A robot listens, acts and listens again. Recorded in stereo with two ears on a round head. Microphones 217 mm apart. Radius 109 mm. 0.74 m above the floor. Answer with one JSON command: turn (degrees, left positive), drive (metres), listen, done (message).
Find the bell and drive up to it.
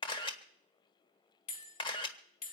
{"turn": 65}
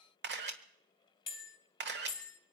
{"turn": 25}
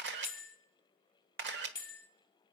{"turn": 20}
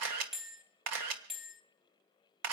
{"drive": 1.0}
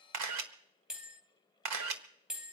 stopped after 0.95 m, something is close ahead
{"done": "I am next to the bell."}